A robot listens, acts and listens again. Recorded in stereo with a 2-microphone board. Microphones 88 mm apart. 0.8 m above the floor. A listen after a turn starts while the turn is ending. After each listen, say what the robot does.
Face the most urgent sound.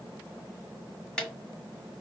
Keep listening.
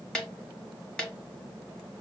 Keep listening.
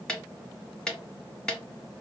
I can't make out anything urgent to turn to.